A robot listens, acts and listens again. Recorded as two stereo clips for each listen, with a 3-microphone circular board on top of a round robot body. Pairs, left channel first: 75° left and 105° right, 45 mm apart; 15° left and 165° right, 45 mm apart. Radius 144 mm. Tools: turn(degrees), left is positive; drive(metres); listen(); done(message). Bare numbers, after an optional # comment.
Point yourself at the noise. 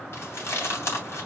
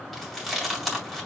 # The chewing: 105° left.
turn(105)
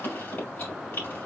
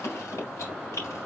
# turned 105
# The chewing is now 30° left.
turn(30)
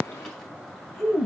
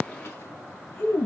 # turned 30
done("Facing the chewing, 2 to 4 m away.")